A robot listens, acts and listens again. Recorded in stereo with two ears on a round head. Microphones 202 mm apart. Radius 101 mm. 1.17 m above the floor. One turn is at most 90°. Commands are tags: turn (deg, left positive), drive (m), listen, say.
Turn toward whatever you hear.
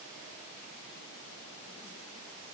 <listen/>
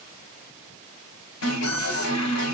<turn deg="75"/>
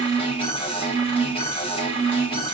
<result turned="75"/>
<turn deg="25"/>
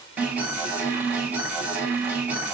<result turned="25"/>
<say>Facing the alarm.</say>